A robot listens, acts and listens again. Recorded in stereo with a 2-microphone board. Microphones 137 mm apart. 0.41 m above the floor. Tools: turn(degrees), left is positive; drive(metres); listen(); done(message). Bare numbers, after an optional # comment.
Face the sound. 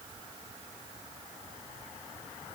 listen()
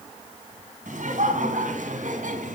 # The laughter: about 75° right or 105° right.
turn(-75)
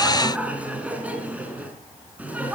# So it is at 10° right.
turn(-10)
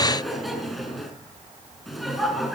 done("Found it: laughter, straight ahead.")